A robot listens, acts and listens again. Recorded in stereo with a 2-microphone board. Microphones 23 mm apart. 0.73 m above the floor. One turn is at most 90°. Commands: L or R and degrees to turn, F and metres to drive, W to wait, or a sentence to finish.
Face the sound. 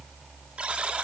R55
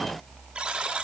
R55
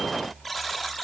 Facing the buzzer.